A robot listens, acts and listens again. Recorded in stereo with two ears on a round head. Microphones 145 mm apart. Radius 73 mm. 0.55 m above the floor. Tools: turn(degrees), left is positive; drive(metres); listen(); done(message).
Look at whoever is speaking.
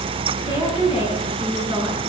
turn(degrees=-20)
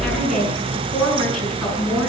done("Found it: a woman speaking, straight ahead.")